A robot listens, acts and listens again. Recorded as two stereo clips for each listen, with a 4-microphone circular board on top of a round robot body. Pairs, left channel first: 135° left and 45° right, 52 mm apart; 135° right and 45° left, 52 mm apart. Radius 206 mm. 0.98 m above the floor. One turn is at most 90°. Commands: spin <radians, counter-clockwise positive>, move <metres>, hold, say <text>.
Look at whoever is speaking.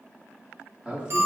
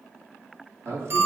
spin 0.52
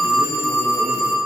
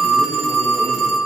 hold
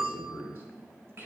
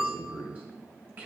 say Found it: a man speaking, straight ahead.